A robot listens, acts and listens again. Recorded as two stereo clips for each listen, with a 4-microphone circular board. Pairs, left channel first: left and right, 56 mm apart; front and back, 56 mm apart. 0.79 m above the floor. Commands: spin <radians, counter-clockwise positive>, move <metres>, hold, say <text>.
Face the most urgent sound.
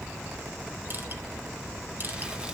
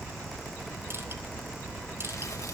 hold
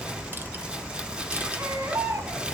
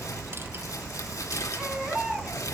spin -1.83
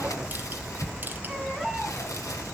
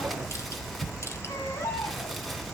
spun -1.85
say Facing the baby crying.